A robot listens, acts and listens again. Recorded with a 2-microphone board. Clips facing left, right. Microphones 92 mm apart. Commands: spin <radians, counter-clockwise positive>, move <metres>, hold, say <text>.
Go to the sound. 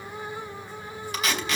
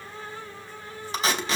spin -0.52
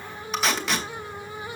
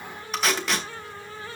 move 1.0
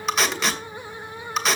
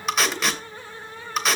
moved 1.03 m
move 1.0
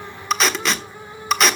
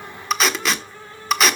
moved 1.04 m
move 1.0
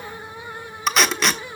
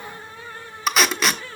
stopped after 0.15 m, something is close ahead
say Arrived at the tape being pulled, straight ahead.